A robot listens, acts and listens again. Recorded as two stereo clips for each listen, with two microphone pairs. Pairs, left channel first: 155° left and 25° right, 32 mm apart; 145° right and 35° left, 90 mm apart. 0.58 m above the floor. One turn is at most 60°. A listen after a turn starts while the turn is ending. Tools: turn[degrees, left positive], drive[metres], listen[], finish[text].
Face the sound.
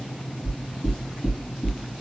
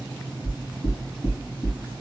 Thought: The knocking: 165° right.
Action: turn[-60]
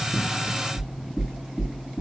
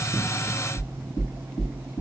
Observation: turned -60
Thought: The knocking is now 110° right.
Action: turn[-60]
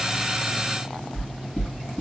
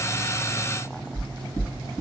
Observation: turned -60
Thought: The knocking is now 45° right.
Action: turn[-45]
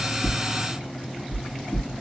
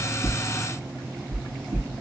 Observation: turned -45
Action: finish[Found it: knocking, straight ahead, 2 to 4 m away.]